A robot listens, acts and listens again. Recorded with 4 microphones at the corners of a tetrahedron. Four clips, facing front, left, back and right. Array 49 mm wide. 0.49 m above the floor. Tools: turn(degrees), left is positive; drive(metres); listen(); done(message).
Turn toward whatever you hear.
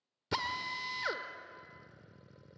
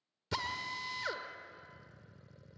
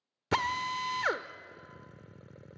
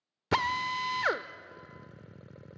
turn(degrees=-120)
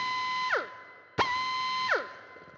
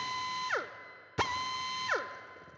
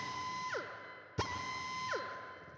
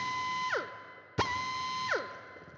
done("Facing the drill, under 1 m away.")